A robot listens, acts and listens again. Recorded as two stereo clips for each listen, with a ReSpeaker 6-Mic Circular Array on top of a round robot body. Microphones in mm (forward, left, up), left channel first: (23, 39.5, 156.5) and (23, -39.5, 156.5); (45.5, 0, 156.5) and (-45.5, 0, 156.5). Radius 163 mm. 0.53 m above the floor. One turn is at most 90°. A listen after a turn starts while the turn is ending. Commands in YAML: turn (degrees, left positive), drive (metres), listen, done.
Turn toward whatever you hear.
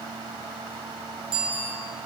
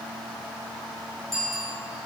turn: -85
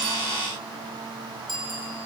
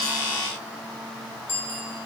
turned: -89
done: "Found it: a bicycle bell, straight ahead, over 4 m away."